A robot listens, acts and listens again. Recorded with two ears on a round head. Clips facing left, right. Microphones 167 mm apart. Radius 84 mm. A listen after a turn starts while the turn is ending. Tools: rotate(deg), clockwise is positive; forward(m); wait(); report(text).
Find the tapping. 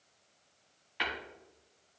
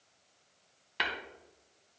rotate(55)
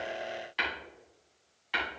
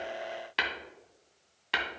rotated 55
rotate(65)
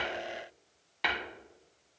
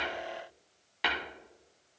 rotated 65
report("Facing the tapping.")